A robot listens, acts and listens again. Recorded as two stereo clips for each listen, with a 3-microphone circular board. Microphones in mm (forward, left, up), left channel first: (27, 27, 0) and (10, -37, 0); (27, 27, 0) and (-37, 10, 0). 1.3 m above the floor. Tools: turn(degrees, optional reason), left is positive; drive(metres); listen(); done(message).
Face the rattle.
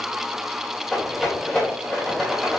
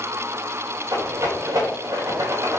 turn(degrees=155, reason="The rattle: 155° left.")
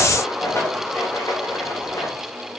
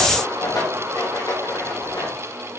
turn(degrees=30, reason="The rattle is now 30° left.")
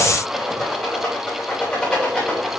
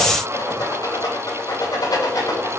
done("Facing the rattle, 2 to 4 m away.")